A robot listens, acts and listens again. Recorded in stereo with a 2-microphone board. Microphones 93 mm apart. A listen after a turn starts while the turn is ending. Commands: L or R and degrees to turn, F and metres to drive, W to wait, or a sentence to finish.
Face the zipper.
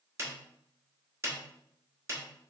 W
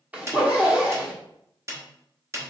R15
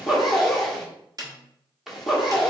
Found it: a zipper, straight ahead.